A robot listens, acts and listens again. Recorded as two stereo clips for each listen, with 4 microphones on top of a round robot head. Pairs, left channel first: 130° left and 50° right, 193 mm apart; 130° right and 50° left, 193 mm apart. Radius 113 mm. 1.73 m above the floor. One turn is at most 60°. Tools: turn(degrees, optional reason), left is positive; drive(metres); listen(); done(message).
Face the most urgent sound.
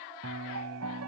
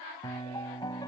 listen()
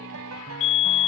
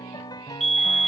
turn(degrees=60, reason="The fire alarm: 140° left.")
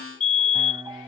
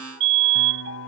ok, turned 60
turn(degrees=60, reason="The fire alarm is now 75° left.")
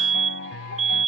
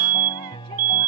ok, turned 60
done("Facing the fire alarm.")